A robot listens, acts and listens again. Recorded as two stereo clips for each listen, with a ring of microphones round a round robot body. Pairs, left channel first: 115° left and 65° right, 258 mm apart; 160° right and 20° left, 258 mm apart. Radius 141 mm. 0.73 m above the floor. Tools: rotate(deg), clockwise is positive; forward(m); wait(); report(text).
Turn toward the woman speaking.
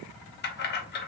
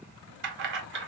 wait()
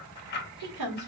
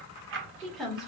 rotate(65)
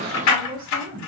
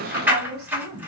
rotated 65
report("Found it: a woman speaking, straight ahead, 1 to 2 m away.")